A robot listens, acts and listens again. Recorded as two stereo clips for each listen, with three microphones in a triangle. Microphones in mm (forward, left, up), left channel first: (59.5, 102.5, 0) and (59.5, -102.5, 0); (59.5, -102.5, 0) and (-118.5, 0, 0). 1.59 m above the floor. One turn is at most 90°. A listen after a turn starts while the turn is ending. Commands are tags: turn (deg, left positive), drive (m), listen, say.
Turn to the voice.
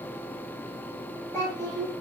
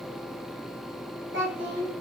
<turn deg="90"/>
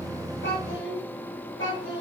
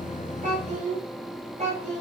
<turn deg="90"/>
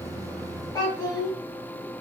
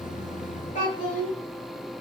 <turn deg="20"/>
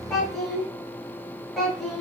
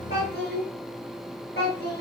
<say>Found it: a child speaking, straight ahead.</say>